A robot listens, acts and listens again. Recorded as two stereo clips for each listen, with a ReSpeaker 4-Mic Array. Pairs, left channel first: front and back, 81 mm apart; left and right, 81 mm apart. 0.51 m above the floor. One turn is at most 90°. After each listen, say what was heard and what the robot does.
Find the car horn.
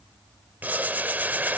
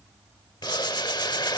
Keep listening.
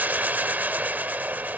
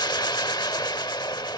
Keep listening.
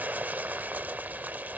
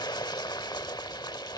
I can't make out a car horn to turn to.